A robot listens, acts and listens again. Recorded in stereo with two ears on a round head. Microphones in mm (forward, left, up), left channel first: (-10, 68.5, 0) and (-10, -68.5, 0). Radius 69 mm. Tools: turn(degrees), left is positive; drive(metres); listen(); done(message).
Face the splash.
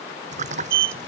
turn(degrees=-50)
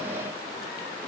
listen()
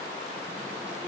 done("I heard a splash, but can't make it out now. It was about straight ahead or 80° right.")